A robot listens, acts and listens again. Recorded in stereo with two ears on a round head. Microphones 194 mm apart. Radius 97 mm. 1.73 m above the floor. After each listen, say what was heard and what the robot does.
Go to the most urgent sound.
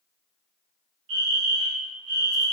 The fire alarm: about 65° right or 115° right. Turn 65° right.
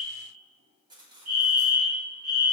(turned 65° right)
So it is at 45° right. Turn 45° right.
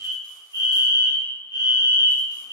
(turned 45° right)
The fire alarm is now 15° right. Turn 15° right.
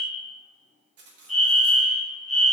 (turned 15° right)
Drive 1.0 m forward.
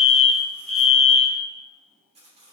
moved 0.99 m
Drive 1.0 m forward.
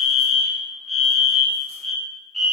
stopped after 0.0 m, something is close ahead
Arrived at the fire alarm, straight ahead.